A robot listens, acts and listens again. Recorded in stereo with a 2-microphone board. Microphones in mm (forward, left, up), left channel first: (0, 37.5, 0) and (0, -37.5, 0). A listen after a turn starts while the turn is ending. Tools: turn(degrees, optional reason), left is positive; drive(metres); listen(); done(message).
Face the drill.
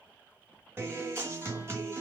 listen()
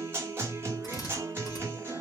turn(degrees=50, reason="The drill: about 50° left or 130° left.")
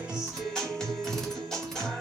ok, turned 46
listen()
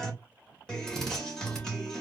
done("Found it: a drill, straight ahead.")